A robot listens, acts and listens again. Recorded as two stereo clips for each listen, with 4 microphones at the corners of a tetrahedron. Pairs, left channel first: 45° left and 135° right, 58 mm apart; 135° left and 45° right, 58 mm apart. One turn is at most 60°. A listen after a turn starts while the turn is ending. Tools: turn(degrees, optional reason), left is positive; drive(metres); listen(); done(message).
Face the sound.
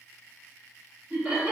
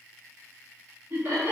turn(degrees=-60, reason="The laughter: 60° right.")
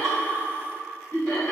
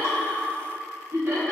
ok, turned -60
turn(degrees=10, reason="The laughter is now 10° left.")
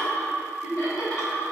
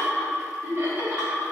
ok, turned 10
turn(degrees=15, reason="The laughter is now 15° left.")
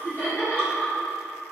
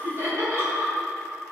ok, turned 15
done("Found it: laughter, straight ahead, 2 to 4 m away.")